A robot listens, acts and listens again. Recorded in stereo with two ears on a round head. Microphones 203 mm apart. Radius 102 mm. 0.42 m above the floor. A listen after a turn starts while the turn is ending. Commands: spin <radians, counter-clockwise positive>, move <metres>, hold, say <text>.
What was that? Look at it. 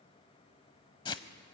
spin 0.35
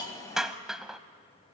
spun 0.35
say Found it: a hiss, straight ahead.